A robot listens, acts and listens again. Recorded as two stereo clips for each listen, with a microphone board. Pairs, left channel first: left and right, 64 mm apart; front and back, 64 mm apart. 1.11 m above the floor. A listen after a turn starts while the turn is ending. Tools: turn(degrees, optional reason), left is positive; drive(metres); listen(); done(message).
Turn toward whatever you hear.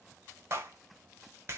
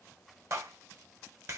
turn(degrees=-140, reason="The clap: 140° right.")
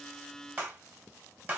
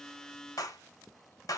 turn(degrees=-30, reason="The clap is now 30° right.")
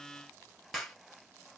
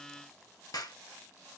done("Found it: a clap, straight ahead.")